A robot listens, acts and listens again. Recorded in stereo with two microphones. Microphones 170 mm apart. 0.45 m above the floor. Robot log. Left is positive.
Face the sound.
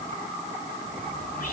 note: The whispering: about 60° left or 120° left.
cmd yaw +60
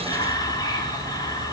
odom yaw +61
note: So it is at 30° left.
cmd yaw +30
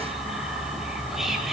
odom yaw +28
end: Facing the whispering.